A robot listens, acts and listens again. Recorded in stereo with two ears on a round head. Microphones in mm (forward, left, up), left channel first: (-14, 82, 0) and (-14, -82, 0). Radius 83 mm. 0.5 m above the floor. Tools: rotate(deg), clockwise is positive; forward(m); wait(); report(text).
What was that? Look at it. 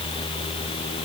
wait()
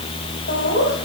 rotate(-55)
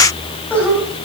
rotate(-10)
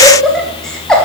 report("Facing the laughter, 2 to 4 m away.")